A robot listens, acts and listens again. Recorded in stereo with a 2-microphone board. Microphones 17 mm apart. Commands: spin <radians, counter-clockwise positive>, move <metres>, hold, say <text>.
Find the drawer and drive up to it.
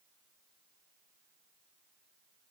hold
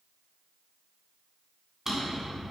spin -0.44
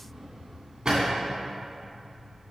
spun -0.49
spin -2.18
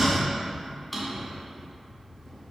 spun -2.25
move 1.0
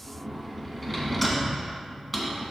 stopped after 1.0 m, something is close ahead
say I am next to the drawer.